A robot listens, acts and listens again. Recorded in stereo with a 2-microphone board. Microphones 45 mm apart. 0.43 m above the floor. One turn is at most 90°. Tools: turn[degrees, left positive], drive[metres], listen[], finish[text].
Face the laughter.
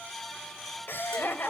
Thought: The laughter: about 55° left or 125° left.
Action: turn[55]
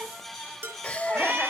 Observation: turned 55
Thought: So it is at 30° left.
Action: turn[30]
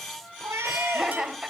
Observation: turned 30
Thought: The laughter is now 15° right.
Action: turn[-15]
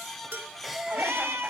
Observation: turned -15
Action: finish[Facing the laughter.]